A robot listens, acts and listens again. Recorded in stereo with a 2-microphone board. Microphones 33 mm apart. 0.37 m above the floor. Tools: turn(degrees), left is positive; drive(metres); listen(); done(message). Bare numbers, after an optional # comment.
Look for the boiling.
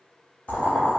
# The boiling: about 55° left or 125° left.
turn(55)
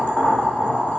# So it is at 65° left.
turn(65)
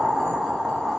# The boiling is now 15° right.
turn(-15)
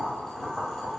done("Found it: boiling, straight ahead, under 1 m away.")